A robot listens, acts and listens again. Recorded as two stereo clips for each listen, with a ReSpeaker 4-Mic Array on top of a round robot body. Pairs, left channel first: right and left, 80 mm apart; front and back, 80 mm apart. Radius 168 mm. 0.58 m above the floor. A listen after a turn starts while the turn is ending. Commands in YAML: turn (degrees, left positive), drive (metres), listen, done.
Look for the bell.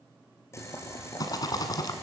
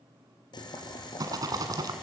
listen: true
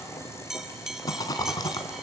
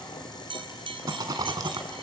turn: 175
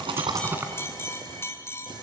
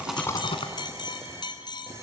turn: -30
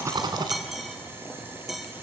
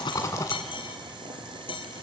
done: "Found it: a bell, straight ahead."